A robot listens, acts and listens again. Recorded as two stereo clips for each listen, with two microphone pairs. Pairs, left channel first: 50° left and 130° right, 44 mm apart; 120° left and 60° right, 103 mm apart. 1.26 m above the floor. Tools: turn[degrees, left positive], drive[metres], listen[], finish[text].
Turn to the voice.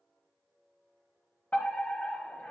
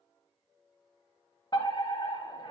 Action: listen[]
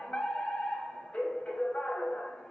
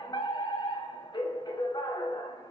Action: listen[]
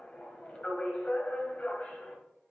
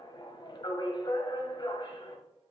Action: finish[I can't make out anyone speaking, only a fire alarm.]